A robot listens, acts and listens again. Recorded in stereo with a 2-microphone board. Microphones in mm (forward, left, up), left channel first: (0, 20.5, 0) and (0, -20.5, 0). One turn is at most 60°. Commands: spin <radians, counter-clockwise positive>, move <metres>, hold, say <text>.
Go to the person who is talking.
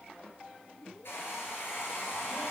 hold
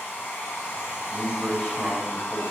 spin 0.52
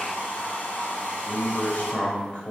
spin 1.05
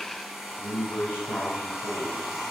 spin 1.05
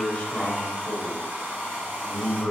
spin 0.52
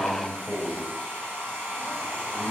spin 0.26
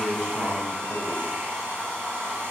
move 1.0
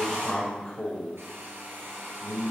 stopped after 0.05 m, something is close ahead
spin 0.26
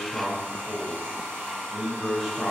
say Blocked. The man speaking is further on, straight ahead.